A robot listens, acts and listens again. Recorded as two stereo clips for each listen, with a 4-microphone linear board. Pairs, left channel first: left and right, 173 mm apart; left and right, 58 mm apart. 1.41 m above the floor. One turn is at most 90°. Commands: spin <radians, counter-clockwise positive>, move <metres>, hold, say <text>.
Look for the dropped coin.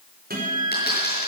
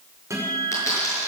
spin 1.13
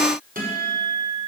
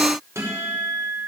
hold
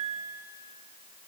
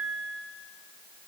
say I heard a dropped coin, but can't make it out now. It was about straight ahead or 50° left.